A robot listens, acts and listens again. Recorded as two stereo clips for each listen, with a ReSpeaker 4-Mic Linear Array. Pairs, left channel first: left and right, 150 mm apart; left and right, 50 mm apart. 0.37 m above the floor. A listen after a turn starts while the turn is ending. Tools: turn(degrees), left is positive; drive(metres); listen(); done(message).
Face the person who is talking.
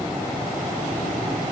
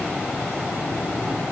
listen()
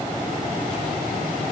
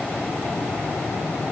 listen()
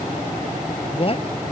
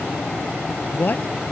turn(degrees=40)
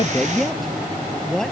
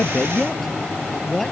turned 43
done("Facing the man speaking.")